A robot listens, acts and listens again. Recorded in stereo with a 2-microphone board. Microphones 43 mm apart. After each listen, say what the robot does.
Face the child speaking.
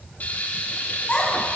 Turn 30° left.
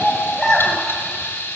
Found it: a child speaking, straight ahead.